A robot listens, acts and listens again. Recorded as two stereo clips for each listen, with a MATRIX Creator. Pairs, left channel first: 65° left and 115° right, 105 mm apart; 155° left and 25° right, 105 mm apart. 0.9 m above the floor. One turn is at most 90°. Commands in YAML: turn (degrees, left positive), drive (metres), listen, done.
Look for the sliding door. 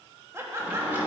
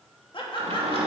turn: -40
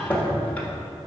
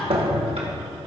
turn: -10
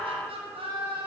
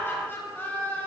listen: true
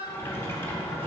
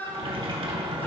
done: "Found it: a sliding door, straight ahead, 1 to 2 m away."